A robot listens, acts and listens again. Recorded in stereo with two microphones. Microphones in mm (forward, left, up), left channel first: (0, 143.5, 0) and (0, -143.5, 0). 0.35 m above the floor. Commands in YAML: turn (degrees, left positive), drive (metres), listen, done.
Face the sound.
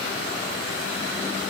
listen: true
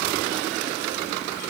listen: true
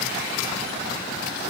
done: "I can't make out anything."